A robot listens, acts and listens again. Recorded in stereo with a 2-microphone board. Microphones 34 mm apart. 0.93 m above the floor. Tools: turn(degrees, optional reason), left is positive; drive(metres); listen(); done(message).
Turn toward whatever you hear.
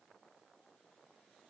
listen()
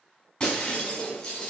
turn(degrees=30, reason="The breaking glass: about 30° left or 150° left.")
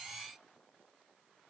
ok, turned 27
listen()
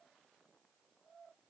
done("I heard breaking glass, but can't make it out now. It was about straight ahead or 125° left.")